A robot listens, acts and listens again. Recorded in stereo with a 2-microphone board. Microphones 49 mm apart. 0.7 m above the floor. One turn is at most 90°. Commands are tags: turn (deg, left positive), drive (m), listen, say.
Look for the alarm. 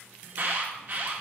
<turn deg="-45"/>
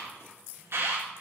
<turn deg="-85"/>
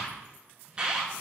<turn deg="-20"/>
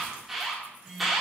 <say>Facing the alarm.</say>